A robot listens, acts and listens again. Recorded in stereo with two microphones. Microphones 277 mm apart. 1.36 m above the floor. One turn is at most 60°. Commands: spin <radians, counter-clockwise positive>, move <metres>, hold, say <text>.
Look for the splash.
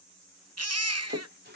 spin -0.61
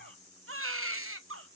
hold
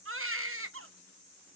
say I heard a splash, but can't make it out now. It was about straight ahead or 110° right.